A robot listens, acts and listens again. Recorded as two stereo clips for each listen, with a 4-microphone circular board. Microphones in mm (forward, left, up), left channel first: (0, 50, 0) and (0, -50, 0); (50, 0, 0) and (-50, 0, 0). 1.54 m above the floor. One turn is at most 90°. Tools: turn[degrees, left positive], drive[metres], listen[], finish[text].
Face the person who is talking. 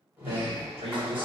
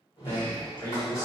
Thought: The man speaking: 55° right.
Action: turn[-55]
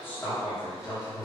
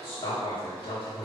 Thought: The man speaking is now 35° left.
Action: turn[35]
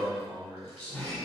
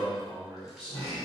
Thought: The man speaking is now 20° left.
Action: turn[20]
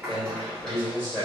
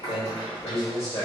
Thought: The man speaking is now 10° left.
Action: turn[10]
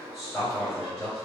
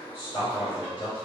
Action: finish[Facing the man speaking, 2 to 4 m away.]